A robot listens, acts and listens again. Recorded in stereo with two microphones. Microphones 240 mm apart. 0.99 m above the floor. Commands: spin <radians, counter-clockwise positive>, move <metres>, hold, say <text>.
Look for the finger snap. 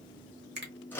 spin -0.79
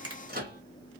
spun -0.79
spin -1.48
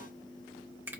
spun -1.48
spin -0.17
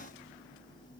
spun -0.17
hold
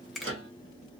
say Facing the finger snap.